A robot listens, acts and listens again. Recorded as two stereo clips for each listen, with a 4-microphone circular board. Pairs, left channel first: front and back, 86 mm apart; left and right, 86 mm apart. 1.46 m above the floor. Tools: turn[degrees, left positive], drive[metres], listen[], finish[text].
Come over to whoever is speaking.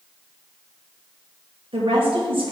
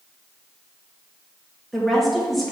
Thought: The woman speaking: straight behind.
Action: turn[180]
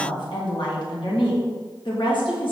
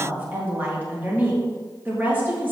Thought: The woman speaking is now 20° right.
Action: turn[-20]
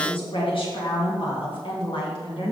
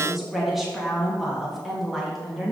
Action: drive[1.0]
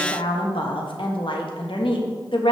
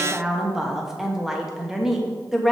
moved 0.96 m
Action: drive[1.0]
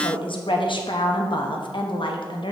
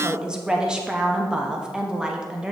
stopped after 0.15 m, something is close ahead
Thought: The woman speaking is now 10° right.
Action: turn[-10]
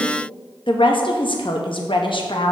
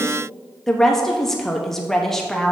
Action: finish[I am next to the woman speaking.]